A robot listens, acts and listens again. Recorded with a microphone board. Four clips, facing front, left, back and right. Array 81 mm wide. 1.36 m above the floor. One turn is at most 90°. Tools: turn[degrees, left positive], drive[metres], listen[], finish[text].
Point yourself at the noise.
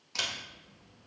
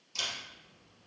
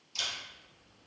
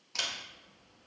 Thought: The camera shutter: 40° right.
Action: turn[-40]
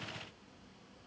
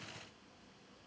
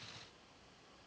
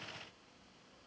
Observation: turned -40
Action: listen[]
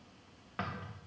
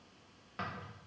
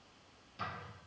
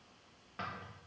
Action: finish[Found it: a camera shutter, straight ahead, 1 to 2 m away.]